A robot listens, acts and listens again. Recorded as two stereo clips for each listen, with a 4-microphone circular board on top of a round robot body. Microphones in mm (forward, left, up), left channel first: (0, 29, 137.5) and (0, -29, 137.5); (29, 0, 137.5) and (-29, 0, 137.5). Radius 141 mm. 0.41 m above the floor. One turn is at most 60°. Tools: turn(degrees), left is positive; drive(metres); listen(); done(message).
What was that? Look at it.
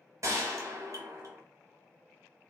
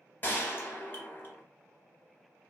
turn(degrees=-55)
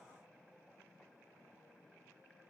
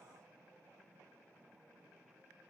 done("Facing where the gunshot came from. I can't hear it now.")